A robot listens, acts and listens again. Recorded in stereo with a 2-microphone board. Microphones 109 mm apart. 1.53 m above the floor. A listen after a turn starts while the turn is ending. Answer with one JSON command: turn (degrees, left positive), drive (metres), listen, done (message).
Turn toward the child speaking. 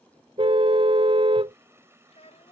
{"turn": 90}
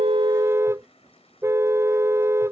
{"listen": true}
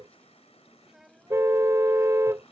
{"done": "Facing the child speaking."}